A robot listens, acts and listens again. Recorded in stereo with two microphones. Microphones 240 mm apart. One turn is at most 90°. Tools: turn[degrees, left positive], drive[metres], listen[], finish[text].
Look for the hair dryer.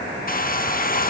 Thought: The hair dryer: about 35° left or 145° left.
Action: turn[35]
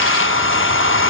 Thought: So it is at 100° left.
Action: turn[90]
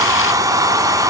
Thought: The hair dryer is now 15° right.
Action: turn[-15]
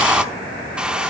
Action: finish[Facing the hair dryer, under 1 m away.]